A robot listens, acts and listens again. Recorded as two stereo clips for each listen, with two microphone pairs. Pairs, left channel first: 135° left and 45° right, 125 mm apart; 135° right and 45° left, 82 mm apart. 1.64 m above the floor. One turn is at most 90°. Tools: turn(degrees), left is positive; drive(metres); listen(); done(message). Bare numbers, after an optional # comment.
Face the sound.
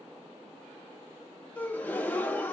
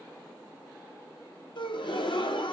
# The gasp: 150° right.
turn(-90)
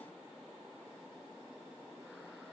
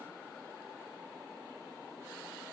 # Nothing new. It was at 60° right.
turn(-60)
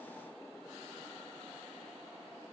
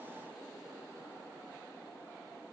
done("Facing where the gasp came from. I can't hear it now.")